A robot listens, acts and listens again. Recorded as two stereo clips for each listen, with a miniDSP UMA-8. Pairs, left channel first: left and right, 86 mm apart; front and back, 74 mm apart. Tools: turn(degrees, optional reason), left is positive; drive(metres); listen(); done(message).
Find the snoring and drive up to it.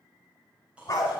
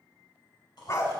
turn(degrees=-15, reason="The snoring: 15° right.")
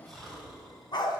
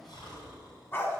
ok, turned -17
drive(metres=1.0)
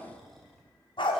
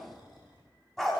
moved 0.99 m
drive(metres=1.0)
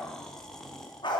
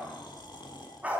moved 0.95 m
drive(metres=1.0)
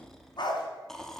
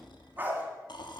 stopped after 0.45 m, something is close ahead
done("I am next to the snoring.")